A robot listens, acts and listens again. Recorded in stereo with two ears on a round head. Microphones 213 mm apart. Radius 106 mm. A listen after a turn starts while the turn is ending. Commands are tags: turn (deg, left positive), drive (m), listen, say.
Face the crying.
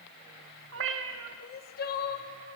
<turn deg="40"/>
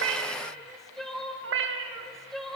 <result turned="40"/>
<say>Found it: crying, straight ahead, 1 to 2 m away.</say>